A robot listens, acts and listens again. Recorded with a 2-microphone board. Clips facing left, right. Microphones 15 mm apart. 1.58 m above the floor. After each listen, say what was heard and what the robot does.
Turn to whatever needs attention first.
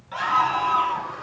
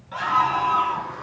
Turn 30° left.
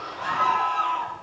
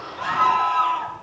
So it is at 20° right. Turn 20° right.
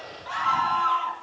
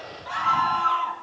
Facing the scream.